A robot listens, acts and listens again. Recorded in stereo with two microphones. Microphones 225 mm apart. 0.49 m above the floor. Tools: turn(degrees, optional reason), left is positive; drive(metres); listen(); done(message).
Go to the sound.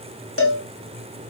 turn(degrees=75, reason="The cowbell: about 75° left or 105° left.")
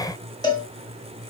turn(degrees=20, reason="So it is at 20° left.")
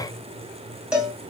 drive(metres=1.0)
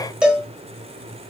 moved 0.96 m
drive(metres=1.0)
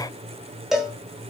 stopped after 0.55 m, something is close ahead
done("I am next to the cowbell.")